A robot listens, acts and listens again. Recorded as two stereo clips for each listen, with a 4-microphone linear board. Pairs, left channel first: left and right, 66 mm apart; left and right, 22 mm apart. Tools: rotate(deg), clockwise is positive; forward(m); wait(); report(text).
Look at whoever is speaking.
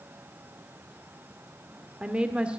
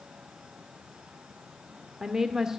rotate(20)
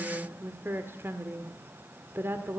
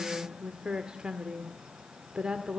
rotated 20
rotate(140)
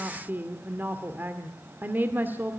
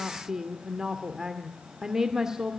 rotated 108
rotate(30)
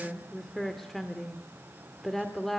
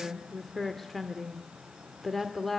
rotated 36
report("Facing the woman speaking.")